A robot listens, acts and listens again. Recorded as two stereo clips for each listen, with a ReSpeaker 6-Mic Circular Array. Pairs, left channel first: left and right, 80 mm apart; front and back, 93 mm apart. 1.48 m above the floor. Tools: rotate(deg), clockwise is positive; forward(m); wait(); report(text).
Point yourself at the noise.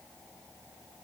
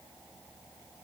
wait()
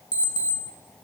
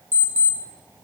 rotate(-115)
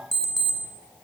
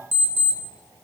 report("Found it: an alarm clock, straight ahead, 1 to 2 m away.")